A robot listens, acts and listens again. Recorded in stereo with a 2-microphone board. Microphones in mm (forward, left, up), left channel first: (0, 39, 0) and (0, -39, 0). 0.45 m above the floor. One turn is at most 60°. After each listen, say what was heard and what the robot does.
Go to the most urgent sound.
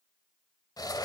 Keep listening.
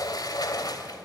Keep listening.
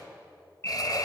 The alarm: about 35° left or 145° left. Turn 35° left.
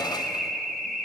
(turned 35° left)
Drive 1.0 m forward.
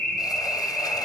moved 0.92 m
Drive 1.0 m forward.
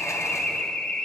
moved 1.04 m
The alarm is now 10° left. Turn 10° left.
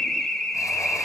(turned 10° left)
Drive 1.0 m forward.
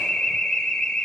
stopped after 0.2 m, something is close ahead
The alarm is now 15° left. Turn 15° left.
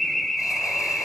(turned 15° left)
Arrived at the alarm, straight ahead.